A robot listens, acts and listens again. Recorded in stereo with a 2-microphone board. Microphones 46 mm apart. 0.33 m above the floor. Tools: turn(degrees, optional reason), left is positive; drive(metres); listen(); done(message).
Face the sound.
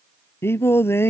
turn(degrees=55, reason="The singing: about 55° left or 125° left.")
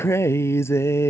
turn(degrees=70, reason="So it is at 70° left.")
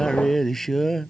done("Facing the singing.")